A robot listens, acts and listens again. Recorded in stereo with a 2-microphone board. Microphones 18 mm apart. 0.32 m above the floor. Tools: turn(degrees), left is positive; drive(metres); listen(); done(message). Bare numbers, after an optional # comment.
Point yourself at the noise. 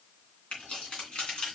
# The keys jangling: about 65° left or 115° left.
turn(65)
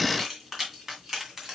# So it is at 15° right.
turn(-15)
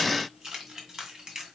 # The keys jangling is now 25° right.
turn(-25)
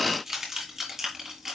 # The keys jangling is now 25° right.
turn(-25)
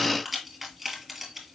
done("Facing the keys jangling, 2 to 4 m away.")